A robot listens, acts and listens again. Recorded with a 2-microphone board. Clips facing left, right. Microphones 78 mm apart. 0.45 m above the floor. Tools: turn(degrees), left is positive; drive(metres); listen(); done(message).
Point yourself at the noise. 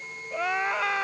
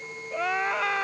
turn(degrees=30)
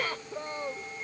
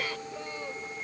turn(degrees=145)
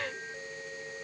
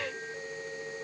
listen()
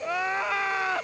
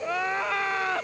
done("Facing the crying.")